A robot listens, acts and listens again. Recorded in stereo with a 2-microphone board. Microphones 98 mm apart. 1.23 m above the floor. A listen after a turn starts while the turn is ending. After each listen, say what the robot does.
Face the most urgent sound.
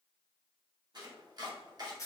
Keep listening.
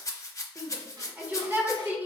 Turn 15° right.
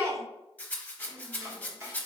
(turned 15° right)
Turn 145° right.
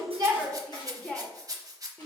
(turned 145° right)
Turn 15° left.
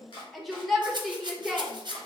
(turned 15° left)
Found it: a shout, straight ahead.